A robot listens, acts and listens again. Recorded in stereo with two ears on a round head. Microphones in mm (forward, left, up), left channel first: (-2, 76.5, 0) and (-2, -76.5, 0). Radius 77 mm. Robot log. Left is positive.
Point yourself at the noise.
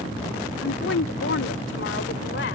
note: The woman speaking: about 70° left or 110° left.
cmd yaw +70
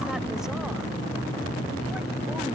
cmd idle
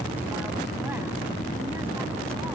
cmd idle
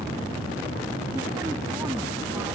end: I heard a woman speaking, but can't make it out now. It was about straight ahead or 40° left.